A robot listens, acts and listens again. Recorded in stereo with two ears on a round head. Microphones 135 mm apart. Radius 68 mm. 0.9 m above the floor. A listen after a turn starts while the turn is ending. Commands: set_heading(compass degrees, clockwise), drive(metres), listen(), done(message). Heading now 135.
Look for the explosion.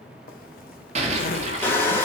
set_heading(175)
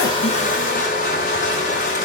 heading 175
listen()
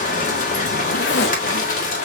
done("I heard an explosion, but can't make it out now. It was about straight ahead or 100° right.")